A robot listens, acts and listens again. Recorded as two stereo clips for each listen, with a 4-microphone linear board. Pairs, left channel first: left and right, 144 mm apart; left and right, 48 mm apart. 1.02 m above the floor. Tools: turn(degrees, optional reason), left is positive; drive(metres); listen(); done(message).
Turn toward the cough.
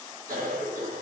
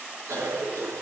turn(degrees=-90)
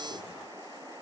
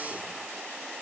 listen()
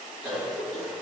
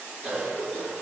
done("Facing the cough, 1 to 2 m away.")